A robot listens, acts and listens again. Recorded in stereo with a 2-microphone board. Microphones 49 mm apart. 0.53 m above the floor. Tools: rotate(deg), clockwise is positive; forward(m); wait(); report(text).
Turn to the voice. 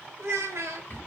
rotate(70)
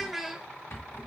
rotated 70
report("Found it: a child speaking, straight ahead, under 1 m away.")